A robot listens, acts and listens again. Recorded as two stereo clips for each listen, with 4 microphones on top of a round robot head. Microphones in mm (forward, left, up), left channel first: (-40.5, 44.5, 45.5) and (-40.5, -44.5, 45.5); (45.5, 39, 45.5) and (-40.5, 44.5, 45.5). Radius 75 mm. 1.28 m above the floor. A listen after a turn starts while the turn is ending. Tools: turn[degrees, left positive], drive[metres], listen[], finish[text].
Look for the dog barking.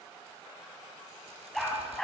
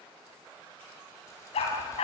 Action: finish[Found it: a dog barking, straight ahead, over 4 m away.]